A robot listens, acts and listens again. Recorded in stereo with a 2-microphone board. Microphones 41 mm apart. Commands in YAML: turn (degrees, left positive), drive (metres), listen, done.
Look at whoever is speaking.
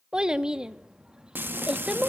turn: -20
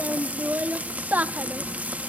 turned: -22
turn: -140
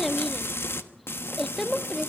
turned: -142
done: "Facing the child speaking."